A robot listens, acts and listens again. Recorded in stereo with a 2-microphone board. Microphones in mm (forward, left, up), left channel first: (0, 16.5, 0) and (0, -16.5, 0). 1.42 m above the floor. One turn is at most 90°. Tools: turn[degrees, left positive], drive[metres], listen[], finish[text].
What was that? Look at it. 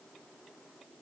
Action: listen[]
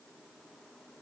Action: listen[]
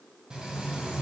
Thought: The frying: about 30° right or 150° right.
Action: turn[-30]
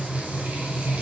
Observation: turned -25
Thought: So it is at 120° right.
Action: turn[-90]
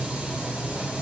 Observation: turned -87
Thought: The frying is now 35° right.
Action: turn[-35]
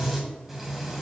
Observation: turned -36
Action: finish[Facing the frying.]